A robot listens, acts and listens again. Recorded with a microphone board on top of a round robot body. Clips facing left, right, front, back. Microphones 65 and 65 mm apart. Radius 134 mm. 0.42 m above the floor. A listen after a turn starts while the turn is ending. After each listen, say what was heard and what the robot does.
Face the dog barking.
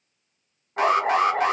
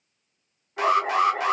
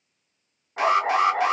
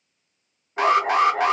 The dog barking: 50° left. Turn 50° left.
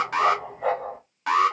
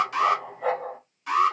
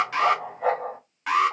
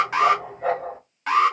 Facing the dog barking.